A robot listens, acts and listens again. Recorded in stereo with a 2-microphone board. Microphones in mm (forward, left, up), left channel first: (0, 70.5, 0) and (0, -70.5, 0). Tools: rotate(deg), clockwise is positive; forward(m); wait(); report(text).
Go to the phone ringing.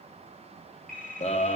rotate(-90)
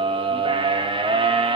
wait()
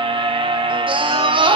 wait()
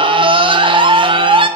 report("I heard a phone ringing from this way, but can't make it out now. I did not reach it.")